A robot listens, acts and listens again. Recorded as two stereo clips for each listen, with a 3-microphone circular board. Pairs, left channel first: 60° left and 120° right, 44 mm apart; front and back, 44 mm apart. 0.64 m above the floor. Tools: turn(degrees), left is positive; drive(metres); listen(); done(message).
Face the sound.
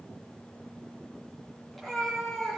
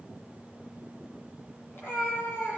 turn(degrees=-25)
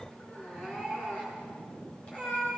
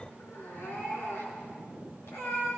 done("Facing the cat meowing, over 4 m away.")